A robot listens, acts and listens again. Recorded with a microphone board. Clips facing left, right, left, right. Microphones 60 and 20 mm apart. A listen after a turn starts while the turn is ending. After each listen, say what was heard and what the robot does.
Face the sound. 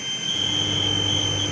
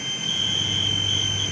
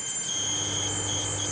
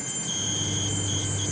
Turn 90° left.
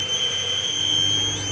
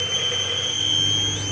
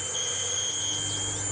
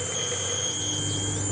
Facing the microwave.